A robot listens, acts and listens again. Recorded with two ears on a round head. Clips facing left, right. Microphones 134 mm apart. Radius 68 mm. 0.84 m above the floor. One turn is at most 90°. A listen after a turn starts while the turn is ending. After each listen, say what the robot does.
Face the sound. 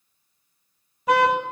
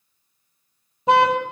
Turn 25° right.
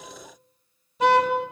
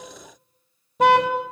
Turn 90° right.
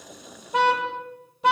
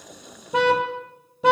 Turn 70° right.
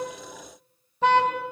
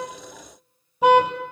Turn 10° right.
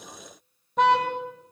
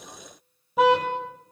Facing the car horn, 2 to 4 m away.